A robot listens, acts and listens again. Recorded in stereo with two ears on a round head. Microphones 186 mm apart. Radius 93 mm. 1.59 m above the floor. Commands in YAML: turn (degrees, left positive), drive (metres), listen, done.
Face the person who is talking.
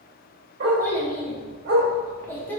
turn: 30
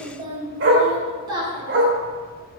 turn: -20
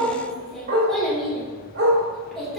done: "Found it: a child speaking, straight ahead."